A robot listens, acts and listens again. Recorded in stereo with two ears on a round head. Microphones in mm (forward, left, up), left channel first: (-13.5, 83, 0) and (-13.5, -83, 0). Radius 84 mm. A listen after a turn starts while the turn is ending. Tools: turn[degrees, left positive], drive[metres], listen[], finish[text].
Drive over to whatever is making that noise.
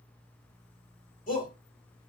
Thought: The shout: about 45° left or 135° left.
Action: turn[45]
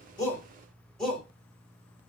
Action: drive[1.0]
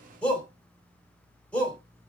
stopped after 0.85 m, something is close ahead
Thought: The shout is now 10° left.
Action: turn[10]
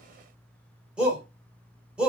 Action: finish[Arrived at the shout, straight ahead.]